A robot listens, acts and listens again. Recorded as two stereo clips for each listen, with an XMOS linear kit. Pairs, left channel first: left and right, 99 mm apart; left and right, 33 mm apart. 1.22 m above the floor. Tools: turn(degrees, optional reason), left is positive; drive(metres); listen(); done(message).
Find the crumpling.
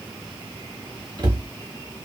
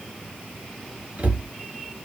listen()
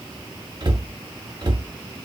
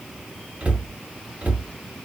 listen()
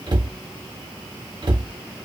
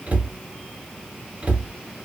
done("I can't make out crumpling to turn to.")